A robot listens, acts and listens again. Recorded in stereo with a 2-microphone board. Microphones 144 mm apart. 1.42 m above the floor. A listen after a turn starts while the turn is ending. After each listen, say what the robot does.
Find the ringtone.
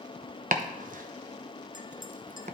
Keep listening.
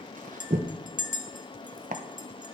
Keep listening.
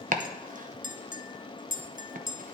I can't make out a ringtone, only chopping and a clink.